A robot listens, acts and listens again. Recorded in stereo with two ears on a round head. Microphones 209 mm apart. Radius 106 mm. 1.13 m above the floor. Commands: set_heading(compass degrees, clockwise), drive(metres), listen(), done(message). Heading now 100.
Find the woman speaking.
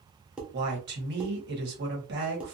set_heading(150)
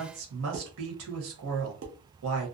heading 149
set_heading(224)
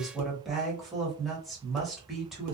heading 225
done("Found it: a woman speaking, straight ahead, 1 to 2 m away.")